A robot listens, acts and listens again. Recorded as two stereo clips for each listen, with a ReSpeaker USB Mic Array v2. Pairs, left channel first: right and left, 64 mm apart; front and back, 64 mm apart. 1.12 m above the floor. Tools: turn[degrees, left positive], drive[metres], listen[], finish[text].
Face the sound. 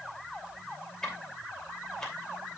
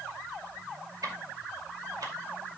Thought: The ticking: 170° right.
Action: turn[-170]
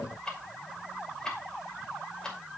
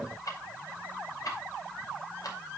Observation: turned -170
Thought: The ticking is now 10° right.
Action: turn[-10]
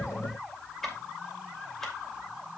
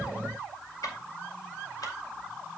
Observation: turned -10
Action: finish[Found it: ticking, straight ahead.]